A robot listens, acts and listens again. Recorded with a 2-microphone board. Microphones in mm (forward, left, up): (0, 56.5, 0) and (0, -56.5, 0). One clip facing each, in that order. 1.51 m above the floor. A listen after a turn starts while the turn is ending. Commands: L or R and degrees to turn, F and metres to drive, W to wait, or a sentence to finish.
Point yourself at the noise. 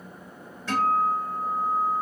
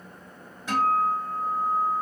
R15
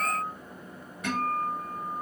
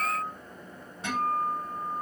R150
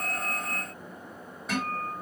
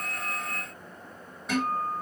Found it: a guitar, straight ahead, 1 to 2 m away.